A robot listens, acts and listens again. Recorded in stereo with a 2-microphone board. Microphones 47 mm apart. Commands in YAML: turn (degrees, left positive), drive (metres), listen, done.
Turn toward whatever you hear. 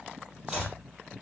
turn: -30
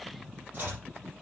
turn: -140
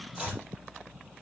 turn: -20
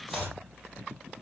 done: "Facing the chopping."